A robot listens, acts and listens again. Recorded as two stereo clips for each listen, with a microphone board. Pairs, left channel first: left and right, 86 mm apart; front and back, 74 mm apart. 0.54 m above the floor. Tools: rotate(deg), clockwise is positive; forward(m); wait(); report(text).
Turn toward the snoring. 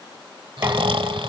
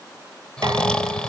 rotate(80)
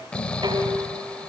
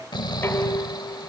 rotate(-15)
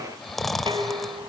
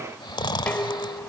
report("Found it: snoring, straight ahead.")